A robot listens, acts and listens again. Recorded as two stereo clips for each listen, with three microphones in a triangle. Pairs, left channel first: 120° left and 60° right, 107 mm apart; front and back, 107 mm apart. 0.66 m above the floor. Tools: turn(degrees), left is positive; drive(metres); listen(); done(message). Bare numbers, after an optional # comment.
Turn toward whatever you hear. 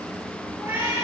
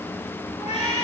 # The cat meowing: 10° left.
turn(10)
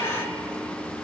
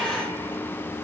listen()
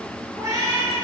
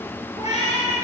done("Facing the cat meowing.")